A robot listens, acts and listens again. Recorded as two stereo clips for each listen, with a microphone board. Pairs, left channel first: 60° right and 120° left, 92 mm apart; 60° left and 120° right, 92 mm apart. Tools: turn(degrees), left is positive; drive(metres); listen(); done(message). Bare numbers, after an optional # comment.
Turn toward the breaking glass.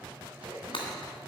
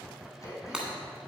# The breaking glass: 40° right.
turn(-40)
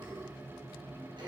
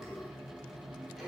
done("I heard breaking glass from this way, but can't make it out now.")